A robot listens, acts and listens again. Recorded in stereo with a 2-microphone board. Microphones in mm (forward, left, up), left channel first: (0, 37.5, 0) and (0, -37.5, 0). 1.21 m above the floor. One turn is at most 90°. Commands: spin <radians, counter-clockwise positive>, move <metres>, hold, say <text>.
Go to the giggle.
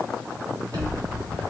hold
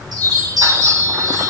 hold
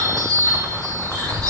say I can't make out a giggle, only a chime.